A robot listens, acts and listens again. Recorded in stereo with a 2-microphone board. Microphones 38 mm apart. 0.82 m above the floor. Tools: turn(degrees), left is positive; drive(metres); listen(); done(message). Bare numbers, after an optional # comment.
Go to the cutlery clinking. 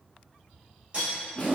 # The cutlery clinking: about 35° right or 145° right.
turn(-35)
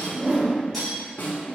drive(1.0)
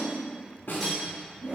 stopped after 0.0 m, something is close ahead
listen()
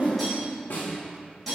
done("Blocked. The cutlery clinking is further on, straight ahead.")